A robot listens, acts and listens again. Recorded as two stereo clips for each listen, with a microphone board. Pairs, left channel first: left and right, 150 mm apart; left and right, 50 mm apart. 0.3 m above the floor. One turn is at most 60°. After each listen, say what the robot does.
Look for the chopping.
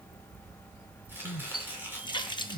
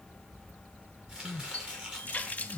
Turn 30° right.
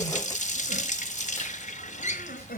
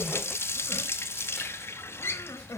Keep listening.
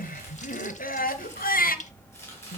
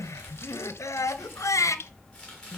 Turn 15° left.
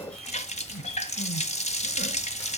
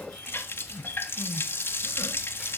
Keep listening.
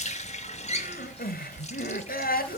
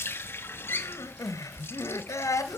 Keep listening.
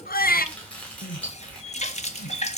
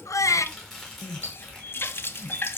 Turn 10° left.
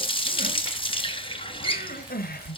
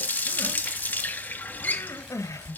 Keep listening.
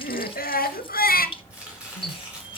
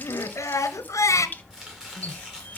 Turn 10° right.
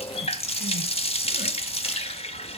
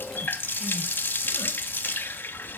Keep listening.
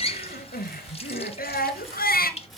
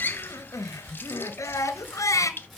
Found it: chopping, straight ahead.